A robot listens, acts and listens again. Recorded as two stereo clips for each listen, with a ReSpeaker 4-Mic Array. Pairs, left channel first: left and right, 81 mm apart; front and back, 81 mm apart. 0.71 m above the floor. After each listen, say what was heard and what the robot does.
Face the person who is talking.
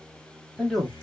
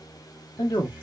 Facing the man speaking, 1 to 2 m away.